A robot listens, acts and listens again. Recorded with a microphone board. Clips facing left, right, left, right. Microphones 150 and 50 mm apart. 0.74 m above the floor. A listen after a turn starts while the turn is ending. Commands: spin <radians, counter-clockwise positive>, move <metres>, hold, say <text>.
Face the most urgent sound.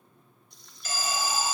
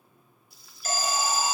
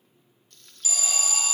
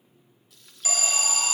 spin -0.79
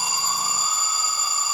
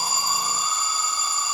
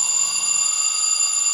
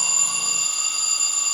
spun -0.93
spin 0.17
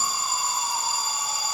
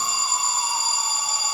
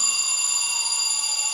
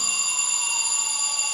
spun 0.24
say Found it: an alarm, straight ahead, 2 to 4 m away.